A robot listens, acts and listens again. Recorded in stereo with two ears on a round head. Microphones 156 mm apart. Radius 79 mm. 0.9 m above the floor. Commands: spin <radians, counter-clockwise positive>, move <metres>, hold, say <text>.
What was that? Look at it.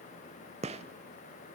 spin -0.70
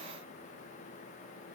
hold
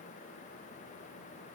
say I heard a gunshot, but can't make it out now. It was about straight ahead or 100° right.